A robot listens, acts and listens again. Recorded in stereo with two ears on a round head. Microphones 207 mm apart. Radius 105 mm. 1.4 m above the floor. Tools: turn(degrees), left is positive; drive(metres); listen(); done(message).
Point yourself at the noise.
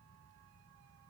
listen()
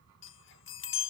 turn(degrees=60)
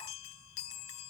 turn(degrees=60)
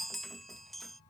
done("Facing the chime.")